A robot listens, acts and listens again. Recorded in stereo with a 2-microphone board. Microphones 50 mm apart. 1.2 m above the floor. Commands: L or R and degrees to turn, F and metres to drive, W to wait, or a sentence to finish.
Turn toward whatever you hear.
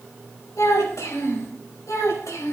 L90
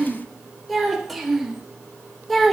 Found it: a child speaking, straight ahead, 2 to 4 m away.